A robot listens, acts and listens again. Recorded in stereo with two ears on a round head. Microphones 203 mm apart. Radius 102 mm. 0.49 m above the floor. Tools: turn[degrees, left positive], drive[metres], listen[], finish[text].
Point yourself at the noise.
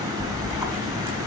Action: turn[-30]
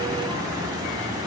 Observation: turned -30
Action: listen[]
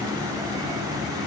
Action: finish[I heard a splash, but can't make it out now. It was about 20° left or 140° right.]